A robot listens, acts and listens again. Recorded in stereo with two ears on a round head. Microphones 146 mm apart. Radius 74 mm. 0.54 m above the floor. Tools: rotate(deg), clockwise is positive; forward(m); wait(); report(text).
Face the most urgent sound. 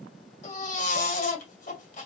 rotate(-50)
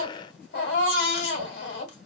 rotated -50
rotate(-80)
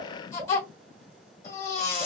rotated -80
rotate(-20)
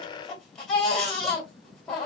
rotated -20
report("Facing the baby crying.")